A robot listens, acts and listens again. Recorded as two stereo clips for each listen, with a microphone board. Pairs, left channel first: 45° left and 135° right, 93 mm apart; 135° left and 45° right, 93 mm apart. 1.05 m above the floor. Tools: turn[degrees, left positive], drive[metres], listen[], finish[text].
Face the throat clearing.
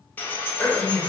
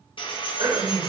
Thought: The throat clearing: 35° right.
Action: turn[-35]
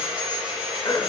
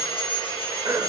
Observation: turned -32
Action: finish[Facing the throat clearing.]